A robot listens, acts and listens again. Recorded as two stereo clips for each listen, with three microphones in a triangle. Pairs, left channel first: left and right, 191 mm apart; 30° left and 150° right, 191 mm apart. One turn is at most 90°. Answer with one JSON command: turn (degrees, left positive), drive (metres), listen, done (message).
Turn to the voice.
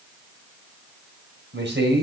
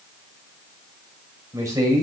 {"turn": -75}
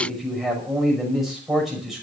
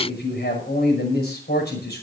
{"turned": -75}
{"done": "Facing the man speaking, over 4 m away."}